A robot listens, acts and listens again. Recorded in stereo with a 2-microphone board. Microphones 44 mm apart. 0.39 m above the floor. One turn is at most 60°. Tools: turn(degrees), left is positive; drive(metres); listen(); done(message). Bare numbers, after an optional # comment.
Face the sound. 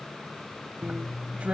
# The drill: about 35° right or 145° right.
turn(-35)
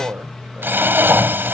# So it is at 105° right.
turn(-60)
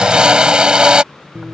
# The drill is now 20° right.
turn(-20)
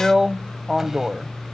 # The drill is now 10° right.
turn(-10)
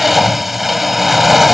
done("Facing the drill.")